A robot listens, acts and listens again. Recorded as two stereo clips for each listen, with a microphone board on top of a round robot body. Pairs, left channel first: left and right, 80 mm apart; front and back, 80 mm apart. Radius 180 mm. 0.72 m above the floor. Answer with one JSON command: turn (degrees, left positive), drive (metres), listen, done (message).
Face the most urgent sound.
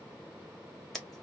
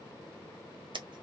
{"listen": true}
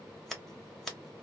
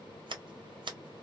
{"listen": true}
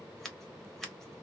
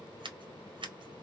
{"done": "I can't make out anything urgent to turn to."}